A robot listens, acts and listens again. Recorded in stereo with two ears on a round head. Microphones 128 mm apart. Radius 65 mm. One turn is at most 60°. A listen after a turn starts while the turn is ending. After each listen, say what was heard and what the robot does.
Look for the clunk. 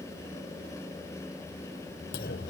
Turn 60° left.
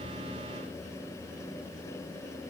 Nothing new. It was at 30° left. Turn 30° left.
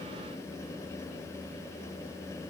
Facing where the clunk came from. I can't hear it now.